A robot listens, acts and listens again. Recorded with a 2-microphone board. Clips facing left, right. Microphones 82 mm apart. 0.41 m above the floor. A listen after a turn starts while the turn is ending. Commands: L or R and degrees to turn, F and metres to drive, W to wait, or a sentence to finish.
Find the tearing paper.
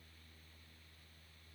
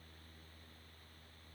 W
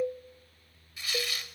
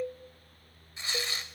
R30
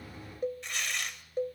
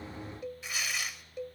Found it: tearing paper, straight ahead.